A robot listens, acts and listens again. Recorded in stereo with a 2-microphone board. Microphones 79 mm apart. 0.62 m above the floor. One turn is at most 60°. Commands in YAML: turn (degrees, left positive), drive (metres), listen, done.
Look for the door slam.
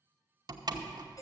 turn: -55
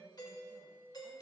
listen: true
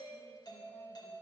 done: "I heard a door slam, but can't make it out now. It was about straight ahead or 70° right."